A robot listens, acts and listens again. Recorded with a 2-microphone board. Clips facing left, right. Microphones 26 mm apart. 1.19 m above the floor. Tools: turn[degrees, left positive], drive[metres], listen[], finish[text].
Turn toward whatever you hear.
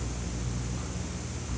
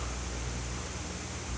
Action: listen[]
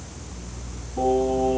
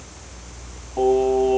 Action: turn[-90]
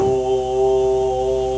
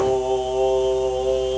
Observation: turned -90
Thought: So it is at 15° right.
Action: turn[-15]
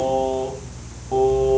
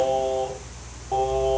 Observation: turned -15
Action: finish[Facing the singing.]